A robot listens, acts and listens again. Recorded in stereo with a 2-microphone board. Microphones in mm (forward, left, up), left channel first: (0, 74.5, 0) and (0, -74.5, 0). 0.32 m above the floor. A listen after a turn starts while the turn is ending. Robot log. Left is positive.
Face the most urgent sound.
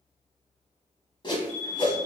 note: The alarm: about 60° left or 120° left.
cmd yaw +60
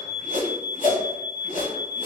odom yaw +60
note: So it is at 40° left.
cmd yaw +40
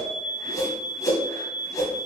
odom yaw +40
note: The alarm is now 20° right.
cmd yaw -20
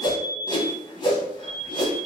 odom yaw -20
end: Found it: an alarm, straight ahead.